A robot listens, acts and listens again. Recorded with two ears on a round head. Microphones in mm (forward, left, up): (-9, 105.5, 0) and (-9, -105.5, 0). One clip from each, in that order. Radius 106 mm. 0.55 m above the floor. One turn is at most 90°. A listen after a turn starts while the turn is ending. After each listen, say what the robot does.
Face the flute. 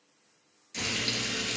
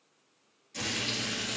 Keep listening.
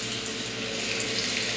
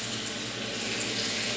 Keep listening.
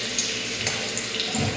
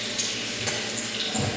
I can't make out a flute, only frying.